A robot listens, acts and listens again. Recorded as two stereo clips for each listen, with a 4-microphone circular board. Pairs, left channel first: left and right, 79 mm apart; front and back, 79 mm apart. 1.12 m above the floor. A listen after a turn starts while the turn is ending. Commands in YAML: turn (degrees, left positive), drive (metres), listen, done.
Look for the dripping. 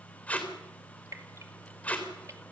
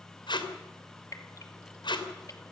turn: -40
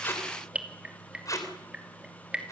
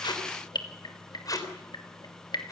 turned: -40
turn: -15
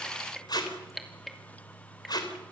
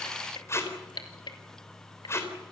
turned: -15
done: "Found it: dripping, straight ahead, 2 to 4 m away."